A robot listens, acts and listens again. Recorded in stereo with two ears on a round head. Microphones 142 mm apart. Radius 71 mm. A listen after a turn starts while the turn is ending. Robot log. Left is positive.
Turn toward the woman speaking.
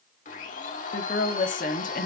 note: The woman speaking: about 55° left or 125° left.
cmd yaw +55
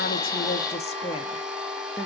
note: So it is at 25° left.
cmd yaw +25
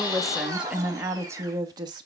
note: The woman speaking is now 30° right.
cmd yaw -30
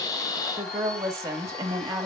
note: The woman speaking is now 20° right.
cmd yaw -20
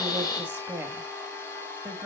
note: The woman speaking is now 10° right.
cmd yaw -10
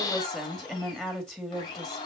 end: Found it: a woman speaking, straight ahead.